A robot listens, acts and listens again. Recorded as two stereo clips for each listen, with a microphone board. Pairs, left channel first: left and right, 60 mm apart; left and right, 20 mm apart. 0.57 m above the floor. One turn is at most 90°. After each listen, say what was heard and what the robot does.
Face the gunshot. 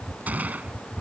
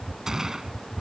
The gunshot: about 25° right or 155° right. Turn 25° right.
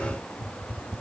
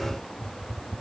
Keep listening.
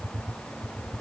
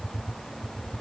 I heard a gunshot, but can't make it out now. It was about straight ahead or 130° right.